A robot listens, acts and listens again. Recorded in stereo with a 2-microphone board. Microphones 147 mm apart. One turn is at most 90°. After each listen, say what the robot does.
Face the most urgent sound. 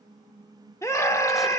Turn 20° left.
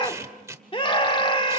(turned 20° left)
Turn 90° left.
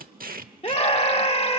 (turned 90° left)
Turn 55° left.
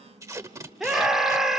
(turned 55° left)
Facing the scream, 1 to 2 m away.